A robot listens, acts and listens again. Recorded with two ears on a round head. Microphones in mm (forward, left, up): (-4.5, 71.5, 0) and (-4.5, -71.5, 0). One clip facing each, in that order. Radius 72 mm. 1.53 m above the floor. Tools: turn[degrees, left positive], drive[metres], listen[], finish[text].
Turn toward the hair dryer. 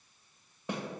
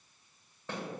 Action: listen[]
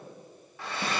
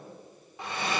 Thought: The hair dryer: about 20° right or 160° right.
Action: turn[-20]
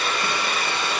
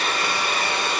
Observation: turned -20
Thought: So it is at 145° right.
Action: turn[-145]
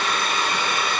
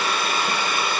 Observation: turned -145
Action: finish[Found it: a hair dryer, straight ahead.]